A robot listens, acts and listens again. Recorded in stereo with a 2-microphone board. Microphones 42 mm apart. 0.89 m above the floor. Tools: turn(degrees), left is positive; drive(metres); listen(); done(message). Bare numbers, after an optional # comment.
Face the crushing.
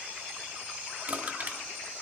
# The crushing: about 45° right or 135° right.
turn(-45)
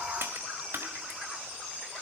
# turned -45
# So it is at 90° right.
turn(-90)
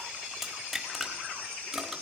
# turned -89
done("Facing the crushing.")